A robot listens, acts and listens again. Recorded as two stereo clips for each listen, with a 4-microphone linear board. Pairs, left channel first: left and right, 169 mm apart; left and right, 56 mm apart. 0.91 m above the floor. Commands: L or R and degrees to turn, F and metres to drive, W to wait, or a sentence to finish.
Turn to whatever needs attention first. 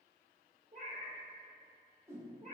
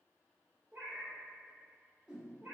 W
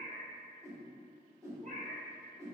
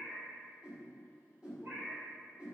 W
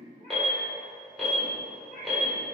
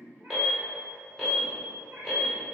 L30
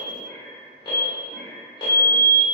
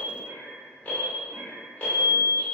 L150
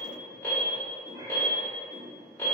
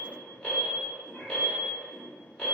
L20
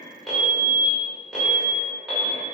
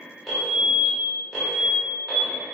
Found it: an alarm, straight ahead.